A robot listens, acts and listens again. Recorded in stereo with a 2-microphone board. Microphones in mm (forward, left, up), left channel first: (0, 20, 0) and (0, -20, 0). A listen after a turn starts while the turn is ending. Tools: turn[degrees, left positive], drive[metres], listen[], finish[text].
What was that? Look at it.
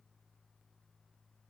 Action: listen[]
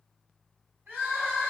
Action: turn[-90]
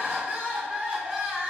Thought: So it is at 15° right.
Action: turn[-15]
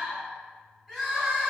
Action: finish[Facing the crying.]